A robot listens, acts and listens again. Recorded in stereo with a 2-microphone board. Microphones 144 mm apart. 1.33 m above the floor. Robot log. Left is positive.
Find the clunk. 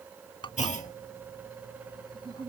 note: The clunk: about 60° left or 120° left.
cmd yaw +60
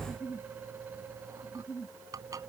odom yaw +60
cmd idle
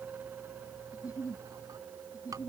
end: I heard a clunk, but can't make it out now. It was about straight ahead or 60° left.